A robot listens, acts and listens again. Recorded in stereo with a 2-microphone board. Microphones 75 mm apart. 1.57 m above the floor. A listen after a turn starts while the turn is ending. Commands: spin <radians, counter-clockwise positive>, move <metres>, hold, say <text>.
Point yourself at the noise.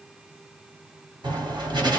spin -1.57
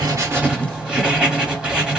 spin -0.17
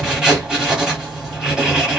say Facing the writing.